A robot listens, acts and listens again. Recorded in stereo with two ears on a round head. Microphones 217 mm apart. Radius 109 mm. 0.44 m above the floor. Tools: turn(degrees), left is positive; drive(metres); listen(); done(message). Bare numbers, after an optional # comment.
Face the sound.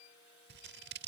# The scissors: about 45° right or 135° right.
turn(-45)
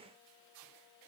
listen()
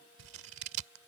# So it is at 80° right.
turn(-80)
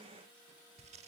# The scissors is now 30° right.
turn(-30)
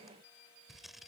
done("Facing the scissors.")